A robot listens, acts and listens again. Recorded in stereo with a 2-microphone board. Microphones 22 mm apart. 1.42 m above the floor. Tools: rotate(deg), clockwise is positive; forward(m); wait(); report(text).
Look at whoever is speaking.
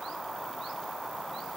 wait()
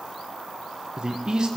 rotate(35)
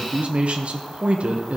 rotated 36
rotate(105)
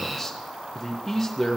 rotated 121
rotate(-15)
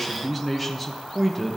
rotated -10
report("Found it: a man speaking, straight ahead, under 1 m away.")